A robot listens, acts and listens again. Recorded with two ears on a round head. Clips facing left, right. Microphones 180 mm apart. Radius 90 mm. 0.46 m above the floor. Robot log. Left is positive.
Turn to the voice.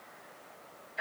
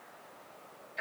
cmd idle
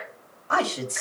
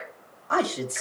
cmd yaw +30
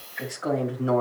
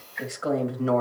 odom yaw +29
note: So it is at 35° right.
cmd yaw -35
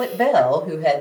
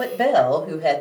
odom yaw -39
note: The woman speaking is now 10° right.
cmd yaw -10
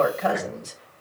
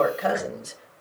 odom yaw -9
note: The woman speaking is now 10° right.
cmd yaw -10
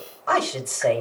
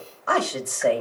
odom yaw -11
note: The woman speaking is now 10° right.
cmd yaw -10
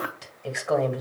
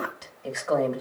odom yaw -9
end: Found it: a woman speaking, straight ahead.